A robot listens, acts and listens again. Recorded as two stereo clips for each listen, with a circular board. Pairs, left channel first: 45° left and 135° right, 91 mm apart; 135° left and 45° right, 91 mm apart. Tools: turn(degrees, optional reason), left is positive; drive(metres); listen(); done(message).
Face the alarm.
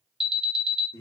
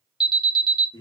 turn(degrees=140, reason="The alarm: 140° left.")
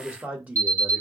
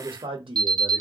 turn(degrees=-20, reason="The alarm is now 20° right.")
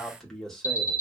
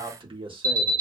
done("Found it: an alarm, straight ahead.")